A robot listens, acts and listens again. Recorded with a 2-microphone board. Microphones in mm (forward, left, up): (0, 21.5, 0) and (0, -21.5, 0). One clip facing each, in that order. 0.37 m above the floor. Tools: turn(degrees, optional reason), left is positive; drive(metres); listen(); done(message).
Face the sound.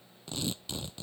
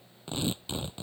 turn(degrees=-25, reason="The tearing paper: about 25° right or 155° right.")
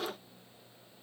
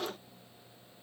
listen()
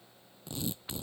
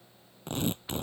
turn(degrees=-130, reason="So it is at 130° right.")
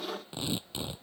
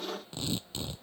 turn(degrees=15, reason="The tearing paper is now 15° left.")
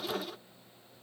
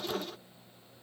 listen()
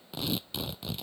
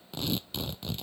done("Facing the tearing paper.")